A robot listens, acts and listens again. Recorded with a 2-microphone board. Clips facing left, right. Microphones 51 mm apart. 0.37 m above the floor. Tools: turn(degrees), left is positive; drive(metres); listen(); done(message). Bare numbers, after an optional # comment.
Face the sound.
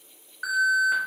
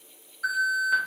# The alarm: about 60° left or 120° left.
turn(60)
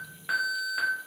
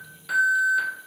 # So it is at 35° left.
turn(35)
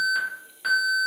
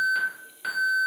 done("Found it: an alarm, straight ahead.")